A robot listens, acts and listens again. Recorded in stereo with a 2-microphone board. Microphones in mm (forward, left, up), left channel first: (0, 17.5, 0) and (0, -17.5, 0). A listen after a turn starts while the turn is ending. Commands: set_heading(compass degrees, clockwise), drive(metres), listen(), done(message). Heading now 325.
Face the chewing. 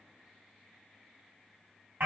listen()
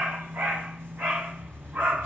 listen()
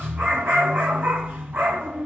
done("I can't make out chewing to turn to.")